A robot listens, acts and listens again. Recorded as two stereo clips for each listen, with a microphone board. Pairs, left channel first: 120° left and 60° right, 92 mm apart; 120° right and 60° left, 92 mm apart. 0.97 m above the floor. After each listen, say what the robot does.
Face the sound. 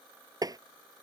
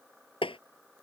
Turn 105° right.
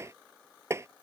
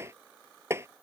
Facing the tapping.